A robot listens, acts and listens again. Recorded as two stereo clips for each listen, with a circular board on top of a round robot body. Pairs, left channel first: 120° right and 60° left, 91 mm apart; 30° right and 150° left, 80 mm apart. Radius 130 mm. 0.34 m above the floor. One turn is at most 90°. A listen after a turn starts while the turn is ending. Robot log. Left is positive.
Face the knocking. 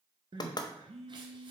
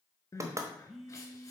note: The knocking: 160° right.
cmd yaw -90
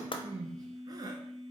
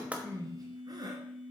note: Nothing new. It was at 70° right.
cmd yaw -70
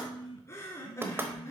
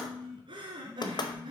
end: Found it: knocking, straight ahead.